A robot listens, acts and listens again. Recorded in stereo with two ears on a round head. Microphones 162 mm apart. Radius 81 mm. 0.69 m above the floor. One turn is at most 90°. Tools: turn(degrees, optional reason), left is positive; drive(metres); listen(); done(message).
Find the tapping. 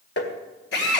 turn(degrees=65, reason="The tapping: about 65° left or 115° left.")
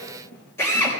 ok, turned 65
listen()
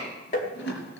turn(degrees=45, reason="So it is at 45° left.")
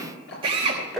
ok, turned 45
done("Facing the tapping.")